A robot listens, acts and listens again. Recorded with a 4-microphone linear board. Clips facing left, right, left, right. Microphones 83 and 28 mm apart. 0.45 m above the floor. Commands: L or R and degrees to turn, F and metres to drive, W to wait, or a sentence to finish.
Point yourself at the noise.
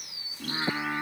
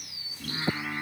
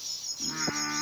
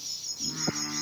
L25
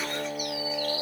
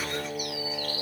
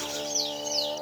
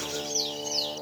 Facing the singing, over 4 m away.